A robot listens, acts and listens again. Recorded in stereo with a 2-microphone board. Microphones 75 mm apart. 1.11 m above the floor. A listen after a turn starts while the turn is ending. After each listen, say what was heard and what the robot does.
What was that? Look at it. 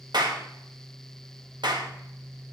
Turn 90° right.
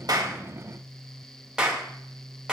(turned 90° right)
So it is at 10° right. Turn 10° right.
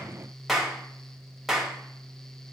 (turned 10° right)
Found it: a clap, straight ahead, 2 to 4 m away.